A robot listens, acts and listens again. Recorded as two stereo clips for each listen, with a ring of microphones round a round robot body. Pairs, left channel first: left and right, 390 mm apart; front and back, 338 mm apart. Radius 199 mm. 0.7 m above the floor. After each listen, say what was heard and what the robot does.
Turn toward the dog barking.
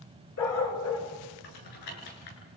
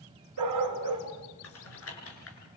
The dog barking: 145° left. Turn 145° left.
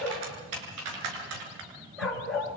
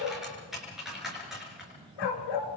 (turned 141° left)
Facing the dog barking, 2 to 4 m away.